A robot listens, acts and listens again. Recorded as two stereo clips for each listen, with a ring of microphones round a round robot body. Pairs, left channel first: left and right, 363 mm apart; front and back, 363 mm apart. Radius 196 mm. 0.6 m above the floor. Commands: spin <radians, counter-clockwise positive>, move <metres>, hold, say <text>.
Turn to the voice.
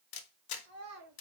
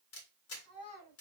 spin -0.79
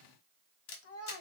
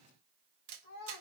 spin 0.79
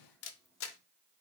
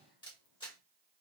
hold
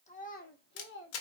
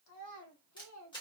spin 0.79
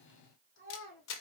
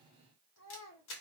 spin 0.70
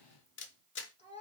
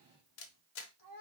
spin 0.35
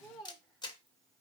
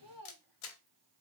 say Found it: a child speaking, straight ahead, 1 to 2 m away.